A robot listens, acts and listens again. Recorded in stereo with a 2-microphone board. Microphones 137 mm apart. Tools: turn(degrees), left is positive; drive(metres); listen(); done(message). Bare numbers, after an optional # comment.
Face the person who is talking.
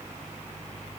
listen()
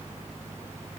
listen()
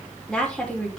turn(30)
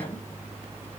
listen()
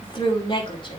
# So it is at 145° left.
turn(145)
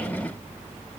listen()
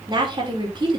# The woman speaking is now 30° right.
turn(-30)
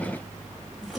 done("Facing the woman speaking.")